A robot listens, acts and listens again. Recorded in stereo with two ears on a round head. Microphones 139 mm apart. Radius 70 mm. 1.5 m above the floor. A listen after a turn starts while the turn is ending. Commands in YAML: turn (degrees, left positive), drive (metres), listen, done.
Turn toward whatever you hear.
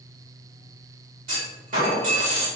turn: -60
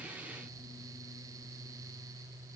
listen: true
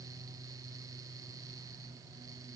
done: "I heard a clunk, but can't make it out now. It was about straight ahead or 60° right."